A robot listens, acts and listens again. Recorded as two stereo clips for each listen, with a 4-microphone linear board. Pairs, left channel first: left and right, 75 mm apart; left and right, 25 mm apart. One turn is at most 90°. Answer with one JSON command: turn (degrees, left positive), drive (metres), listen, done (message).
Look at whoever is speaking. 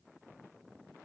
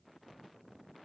{"listen": true}
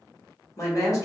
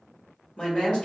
{"turn": 45}
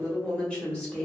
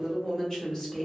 {"turn": 15}
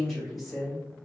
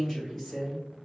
{"done": "Facing the woman speaking, 1 to 2 m away."}